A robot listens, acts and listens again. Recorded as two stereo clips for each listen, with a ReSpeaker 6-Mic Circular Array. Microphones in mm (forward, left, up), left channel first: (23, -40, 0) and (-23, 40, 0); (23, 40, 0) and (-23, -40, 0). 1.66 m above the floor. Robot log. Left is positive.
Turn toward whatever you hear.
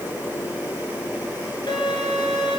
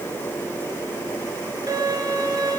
note: The violin: 80° right.
cmd yaw -80
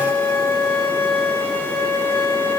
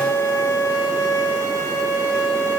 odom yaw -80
end: Facing the violin, over 4 m away.